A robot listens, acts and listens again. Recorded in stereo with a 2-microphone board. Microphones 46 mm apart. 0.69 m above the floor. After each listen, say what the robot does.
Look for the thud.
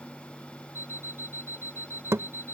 Turn 90° right.
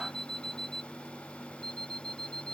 Facing where the thud came from. I can't hear it now.